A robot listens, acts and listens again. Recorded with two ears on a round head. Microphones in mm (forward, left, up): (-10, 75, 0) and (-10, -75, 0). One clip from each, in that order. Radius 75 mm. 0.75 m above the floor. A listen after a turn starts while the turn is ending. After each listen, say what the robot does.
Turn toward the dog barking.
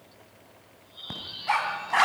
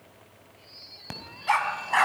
Turn 15° right.
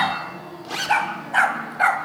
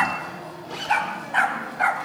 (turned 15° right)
Turn 15° left.
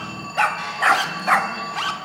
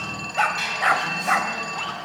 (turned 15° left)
Turn 25° left.
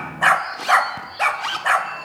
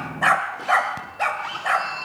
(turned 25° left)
Turn 20° left.
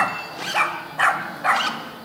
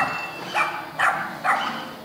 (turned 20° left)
Turn 10° left.
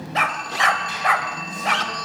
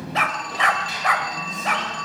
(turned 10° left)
Facing the dog barking, 1 to 2 m away.